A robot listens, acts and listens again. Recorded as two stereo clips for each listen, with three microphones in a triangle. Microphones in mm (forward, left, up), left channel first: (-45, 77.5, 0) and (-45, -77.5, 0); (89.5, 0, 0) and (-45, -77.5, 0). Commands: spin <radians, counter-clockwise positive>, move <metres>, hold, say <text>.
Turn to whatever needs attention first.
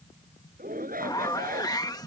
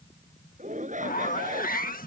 spin -2.01
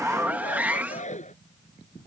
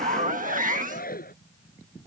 spin 0.87
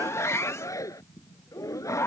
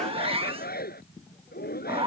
spin 0.35
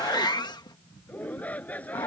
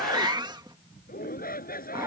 spin 0.17
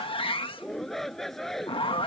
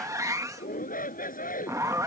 say Found it: a shout, straight ahead.